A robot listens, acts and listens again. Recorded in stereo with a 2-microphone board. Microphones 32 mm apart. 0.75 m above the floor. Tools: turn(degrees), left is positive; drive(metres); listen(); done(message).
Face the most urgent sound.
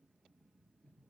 listen()
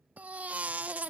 turn(degrees=-55)
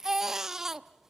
turn(degrees=-15)
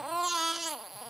done("Facing the baby crying, under 1 m away.")